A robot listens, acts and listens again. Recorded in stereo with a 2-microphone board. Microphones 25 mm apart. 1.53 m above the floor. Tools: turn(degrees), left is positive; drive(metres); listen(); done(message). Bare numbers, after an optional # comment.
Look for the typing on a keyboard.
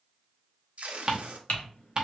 turn(90)
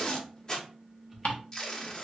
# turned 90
listen()
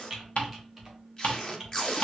done("Facing the typing on a keyboard.")